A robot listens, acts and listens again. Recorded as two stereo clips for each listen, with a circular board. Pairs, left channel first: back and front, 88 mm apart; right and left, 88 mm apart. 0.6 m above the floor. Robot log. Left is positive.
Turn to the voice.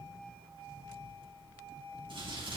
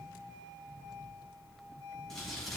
cmd idle
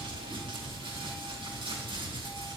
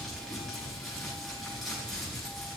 cmd idle
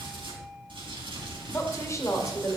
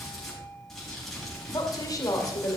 note: The woman speaking: 130° right.
cmd yaw -130
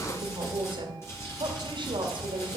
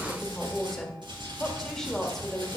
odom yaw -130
end: Facing the woman speaking.